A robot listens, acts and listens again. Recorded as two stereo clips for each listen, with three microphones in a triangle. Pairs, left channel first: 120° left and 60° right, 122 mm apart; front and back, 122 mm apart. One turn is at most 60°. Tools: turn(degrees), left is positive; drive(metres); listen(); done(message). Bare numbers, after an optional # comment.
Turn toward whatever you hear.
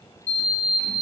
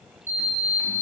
# The sliding door: 110° left.
turn(60)
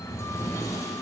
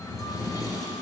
# The sliding door is now 55° left.
turn(55)
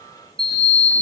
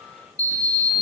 done("Found it: a sliding door, straight ahead, 1 to 2 m away.")